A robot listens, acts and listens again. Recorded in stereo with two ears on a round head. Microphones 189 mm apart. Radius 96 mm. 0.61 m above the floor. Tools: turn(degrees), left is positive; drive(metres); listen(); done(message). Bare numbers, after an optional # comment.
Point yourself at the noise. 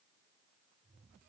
listen()
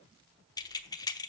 # The keys jangling: about 20° left or 160° left.
turn(20)
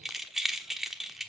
done("Found it: keys jangling, straight ahead.")